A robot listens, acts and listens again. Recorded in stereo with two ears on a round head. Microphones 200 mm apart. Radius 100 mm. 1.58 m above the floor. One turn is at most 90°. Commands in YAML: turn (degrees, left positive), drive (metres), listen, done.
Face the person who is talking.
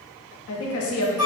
turn: 70
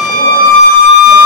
listen: true
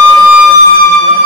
listen: true
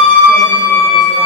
done: "I heard a woman speaking, but can't make it out now. It was about straight ahead or 40° left."